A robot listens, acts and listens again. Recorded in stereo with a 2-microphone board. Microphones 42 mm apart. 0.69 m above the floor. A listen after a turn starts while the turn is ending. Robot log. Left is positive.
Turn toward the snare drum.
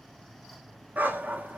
cmd idle
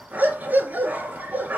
cmd idle
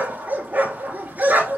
end: I can't make out a snare drum, only a dog barking.